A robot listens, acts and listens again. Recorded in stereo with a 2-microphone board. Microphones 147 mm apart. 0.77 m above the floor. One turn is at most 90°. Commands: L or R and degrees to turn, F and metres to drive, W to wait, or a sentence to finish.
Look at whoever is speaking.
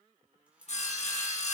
W
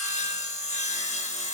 W
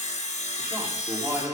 R30
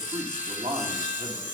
R90
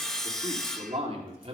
R50
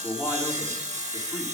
L15
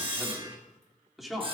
Found it: a man speaking, straight ahead, 2 to 4 m away.